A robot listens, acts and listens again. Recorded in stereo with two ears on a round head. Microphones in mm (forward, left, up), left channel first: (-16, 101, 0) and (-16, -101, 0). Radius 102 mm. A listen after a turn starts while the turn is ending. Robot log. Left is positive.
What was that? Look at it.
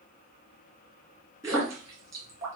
cmd yaw -30
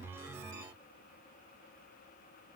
cmd idle
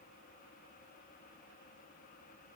end: I heard a splash, but can't make it out now. It was about 15° left or 135° right.